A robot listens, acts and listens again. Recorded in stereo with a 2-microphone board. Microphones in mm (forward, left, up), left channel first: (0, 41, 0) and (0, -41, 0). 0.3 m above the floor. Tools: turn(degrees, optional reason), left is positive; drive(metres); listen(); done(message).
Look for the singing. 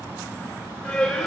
turn(degrees=30)
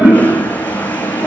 listen()
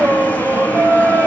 turn(degrees=-40, reason="So it is at 40° right.")
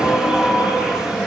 turn(degrees=-15, reason="The singing is now 15° right.")
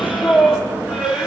turn(degrees=-10, reason="The singing is now 10° right.")
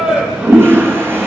done("Found it: singing, straight ahead, over 4 m away.")